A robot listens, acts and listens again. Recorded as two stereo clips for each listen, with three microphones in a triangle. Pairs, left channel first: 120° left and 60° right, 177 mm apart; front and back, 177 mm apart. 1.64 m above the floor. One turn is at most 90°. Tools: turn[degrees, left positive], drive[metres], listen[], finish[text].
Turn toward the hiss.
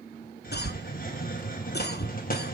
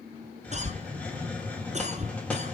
Thought: The hiss: 80° left.
Action: turn[80]
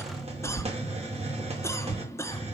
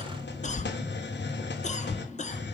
Action: finish[Found it: a hiss, straight ahead, 1 to 2 m away.]